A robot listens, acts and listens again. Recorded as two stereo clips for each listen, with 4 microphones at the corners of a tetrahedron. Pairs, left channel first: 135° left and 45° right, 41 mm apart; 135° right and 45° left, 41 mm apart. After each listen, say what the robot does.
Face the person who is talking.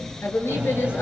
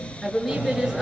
Turn 130° left.
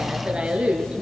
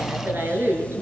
Turn 20° left.
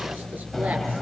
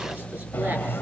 Keep listening.
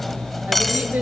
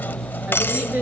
Keep listening.
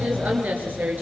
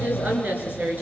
Found it: a woman speaking, straight ahead.